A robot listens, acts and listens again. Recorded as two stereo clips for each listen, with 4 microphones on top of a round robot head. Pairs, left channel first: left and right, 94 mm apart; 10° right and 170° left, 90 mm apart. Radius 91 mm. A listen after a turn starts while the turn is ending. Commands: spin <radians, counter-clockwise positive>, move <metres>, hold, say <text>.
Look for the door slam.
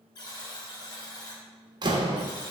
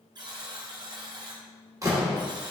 spin -2.27
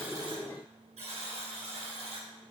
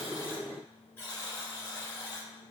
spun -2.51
spin 0.26
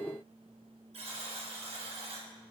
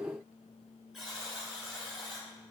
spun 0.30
say Facing where the door slam came from. I can't hear it now.